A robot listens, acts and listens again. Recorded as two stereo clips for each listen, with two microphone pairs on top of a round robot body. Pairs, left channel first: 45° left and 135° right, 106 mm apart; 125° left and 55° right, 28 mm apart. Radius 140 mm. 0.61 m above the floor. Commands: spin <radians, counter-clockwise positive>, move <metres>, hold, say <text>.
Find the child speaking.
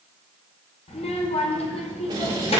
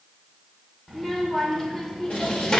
spin 0.96
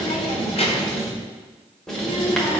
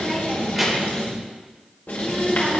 spin 0.79
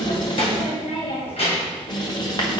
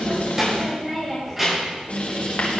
spin 0.44
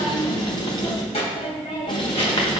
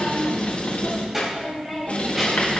spin 0.35
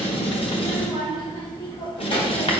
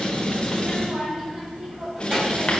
say Found it: a child speaking, straight ahead.